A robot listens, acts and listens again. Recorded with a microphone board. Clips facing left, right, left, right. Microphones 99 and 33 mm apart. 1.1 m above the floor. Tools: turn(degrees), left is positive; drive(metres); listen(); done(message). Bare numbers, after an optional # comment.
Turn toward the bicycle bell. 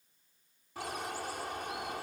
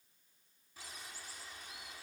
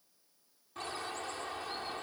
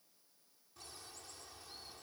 listen()
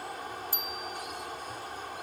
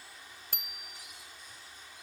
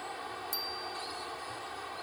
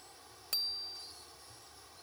# The bicycle bell: about 70° right or 110° right.
turn(-70)
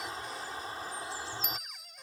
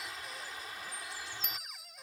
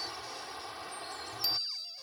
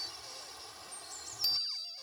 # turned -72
done("Found it: a bicycle bell, straight ahead.")